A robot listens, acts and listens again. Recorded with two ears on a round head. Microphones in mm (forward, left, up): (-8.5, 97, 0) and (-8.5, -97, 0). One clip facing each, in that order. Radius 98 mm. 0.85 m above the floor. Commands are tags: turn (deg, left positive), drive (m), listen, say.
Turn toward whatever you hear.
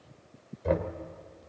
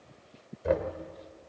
<turn deg="-30"/>
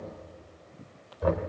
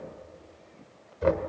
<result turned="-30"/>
<turn deg="-140"/>
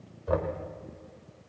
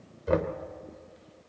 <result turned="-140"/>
<turn deg="-35"/>
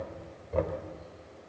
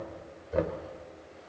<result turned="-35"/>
<turn deg="-15"/>
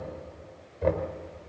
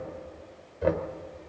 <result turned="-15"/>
<say>Facing the knocking, 1 to 2 m away.</say>